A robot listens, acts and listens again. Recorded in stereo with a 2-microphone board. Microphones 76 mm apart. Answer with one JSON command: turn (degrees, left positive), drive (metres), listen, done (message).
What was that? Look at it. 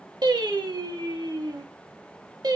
{"turn": -60}
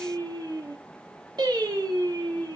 {"turn": -70}
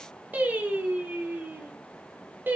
{"turn": -25}
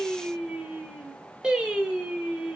{"turn": -10}
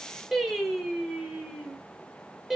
{"done": "Facing the singing."}